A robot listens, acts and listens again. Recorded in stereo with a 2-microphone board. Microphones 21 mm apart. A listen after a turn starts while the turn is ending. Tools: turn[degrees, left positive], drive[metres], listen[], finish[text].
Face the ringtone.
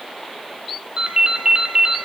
Thought: The ringtone: about 45° right or 135° right.
Action: turn[-45]
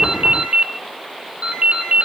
Thought: So it is at 95° right.
Action: turn[-95]
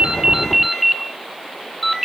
Thought: The ringtone is now 10° right.
Action: turn[-10]
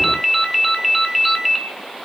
Action: finish[Found it: a ringtone, straight ahead, 1 to 2 m away.]